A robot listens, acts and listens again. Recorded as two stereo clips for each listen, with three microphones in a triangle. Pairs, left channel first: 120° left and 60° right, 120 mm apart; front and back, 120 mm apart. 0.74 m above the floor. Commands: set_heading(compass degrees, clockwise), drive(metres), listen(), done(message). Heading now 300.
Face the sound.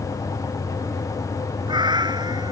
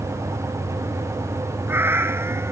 set_heading(50)
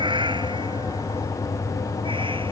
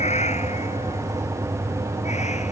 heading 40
set_heading(55)
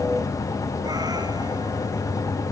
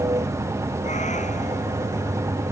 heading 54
listen()
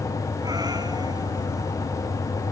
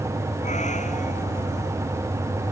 listen()
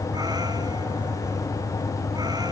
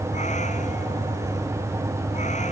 done("Facing where the cat meowing came from. I can't hear it now.")